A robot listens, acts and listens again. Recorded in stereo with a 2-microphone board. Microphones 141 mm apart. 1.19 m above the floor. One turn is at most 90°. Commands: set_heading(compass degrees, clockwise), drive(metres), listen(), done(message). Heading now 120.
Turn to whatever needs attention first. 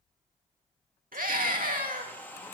set_heading(210)
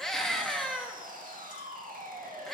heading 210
done("Facing the scream, 2 to 4 m away.")